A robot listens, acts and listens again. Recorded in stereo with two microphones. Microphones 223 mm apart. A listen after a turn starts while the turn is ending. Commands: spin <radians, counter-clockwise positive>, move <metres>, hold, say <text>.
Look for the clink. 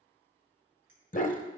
spin -1.13
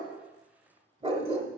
hold
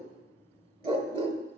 hold
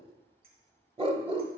spin -0.79
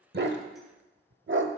hold
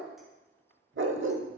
hold
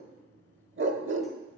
say I heard a clink from this way, but can't make it out now.